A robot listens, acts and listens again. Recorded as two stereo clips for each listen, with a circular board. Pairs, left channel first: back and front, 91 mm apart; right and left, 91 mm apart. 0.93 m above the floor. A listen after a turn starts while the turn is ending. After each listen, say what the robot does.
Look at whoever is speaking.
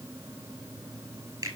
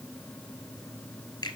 Keep listening.
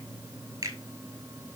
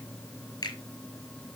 Keep listening.
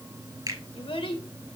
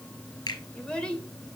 Turn 170° right.
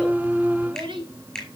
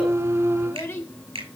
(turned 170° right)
Turn 25° right.
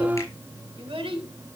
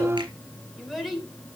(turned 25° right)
Found it: a child speaking, straight ahead, 2 to 4 m away.